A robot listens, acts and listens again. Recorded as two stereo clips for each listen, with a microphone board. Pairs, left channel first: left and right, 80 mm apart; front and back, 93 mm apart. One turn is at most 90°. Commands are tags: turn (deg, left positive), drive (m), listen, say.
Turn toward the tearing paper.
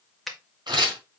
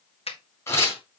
<turn deg="-60"/>
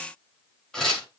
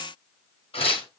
<turn deg="10"/>
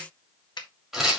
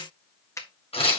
<say>Facing the tearing paper.</say>